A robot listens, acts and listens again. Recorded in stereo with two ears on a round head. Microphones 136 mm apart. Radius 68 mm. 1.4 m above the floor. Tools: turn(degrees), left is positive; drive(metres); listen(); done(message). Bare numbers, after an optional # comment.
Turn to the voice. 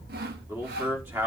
# The man speaking: about 15° right or 165° right.
turn(-15)
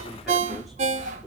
listen()
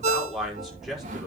turn(30)
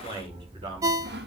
# So it is at 35° right.
turn(-35)
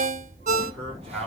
done("Facing the man speaking, over 4 m away.")